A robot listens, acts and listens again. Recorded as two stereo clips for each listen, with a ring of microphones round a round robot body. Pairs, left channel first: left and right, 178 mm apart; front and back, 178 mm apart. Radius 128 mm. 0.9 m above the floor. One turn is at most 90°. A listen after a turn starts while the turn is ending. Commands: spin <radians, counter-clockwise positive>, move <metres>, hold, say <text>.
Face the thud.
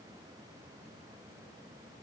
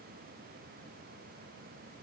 hold
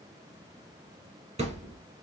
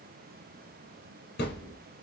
spin -0.70
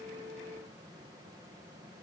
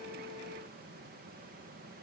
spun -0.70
say I heard a thud from this way, but can't make it out now.